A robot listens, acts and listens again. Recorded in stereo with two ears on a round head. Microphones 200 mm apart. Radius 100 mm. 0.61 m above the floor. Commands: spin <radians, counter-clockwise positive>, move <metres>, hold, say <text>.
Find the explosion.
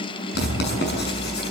spin -0.61
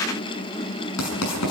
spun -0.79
hold
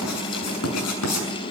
say I heard an explosion, but can't make it out now. It was about 10° left or 100° right.